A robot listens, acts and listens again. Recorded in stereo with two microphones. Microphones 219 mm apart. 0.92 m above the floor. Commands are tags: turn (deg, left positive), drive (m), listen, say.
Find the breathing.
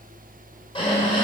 <turn deg="25"/>
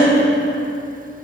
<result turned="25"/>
<turn deg="130"/>
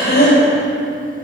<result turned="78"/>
<turn deg="50"/>
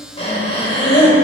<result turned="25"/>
<turn deg="30"/>
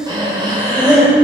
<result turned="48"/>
<turn deg="-20"/>
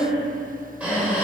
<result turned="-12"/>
<say>Found it: breathing, straight ahead, 2 to 4 m away.</say>